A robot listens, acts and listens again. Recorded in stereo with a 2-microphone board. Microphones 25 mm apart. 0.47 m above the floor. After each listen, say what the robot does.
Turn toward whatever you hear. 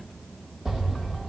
Turn 30° right.
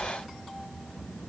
Keep listening.
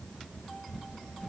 I heard an explosion, but can't make it out now. It was about straight ahead or 120° right.